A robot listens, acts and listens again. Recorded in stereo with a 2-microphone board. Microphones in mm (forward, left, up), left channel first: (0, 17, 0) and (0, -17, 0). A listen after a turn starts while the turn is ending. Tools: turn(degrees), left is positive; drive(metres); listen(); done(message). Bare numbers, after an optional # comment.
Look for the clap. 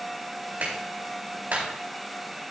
# The clap: about 60° right or 120° right.
turn(-60)
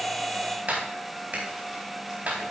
# So it is at 55° right.
turn(-55)
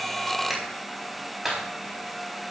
# The clap is now 10° right.
turn(-10)
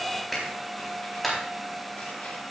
done("Found it: a clap, straight ahead, over 4 m away.")